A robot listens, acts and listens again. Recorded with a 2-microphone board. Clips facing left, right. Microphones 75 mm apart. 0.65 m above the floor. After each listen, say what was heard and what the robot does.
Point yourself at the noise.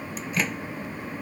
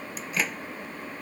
Turn 30° left.
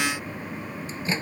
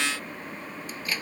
So it is at 155° left. Turn 155° left.
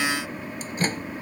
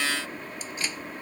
The microwave is now 45° left. Turn 45° left.
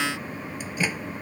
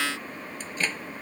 The microwave is now 10° left. Turn 10° left.
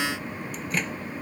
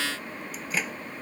Found it: a microwave, straight ahead.